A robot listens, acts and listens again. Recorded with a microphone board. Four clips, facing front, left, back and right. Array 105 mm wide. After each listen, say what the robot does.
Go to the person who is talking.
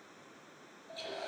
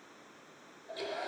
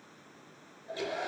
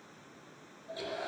Keep listening.
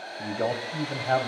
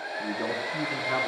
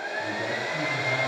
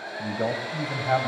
Turn 35° right.
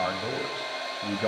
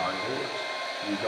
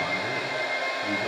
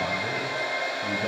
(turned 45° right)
Turn 10° left.
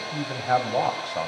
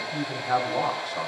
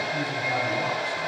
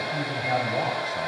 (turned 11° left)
Drive 1.0 m forward.
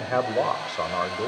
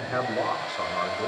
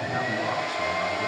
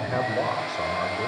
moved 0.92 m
Drive 1.0 m forward.
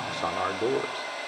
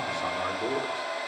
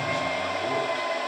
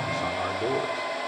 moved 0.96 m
Keep listening.
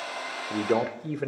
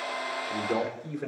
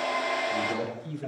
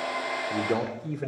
Drive 1.0 m forward.
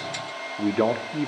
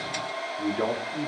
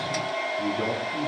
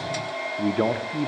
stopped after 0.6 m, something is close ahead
Turn 20° right.
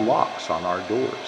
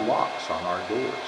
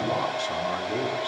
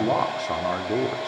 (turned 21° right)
Arrived at the man speaking, straight ahead.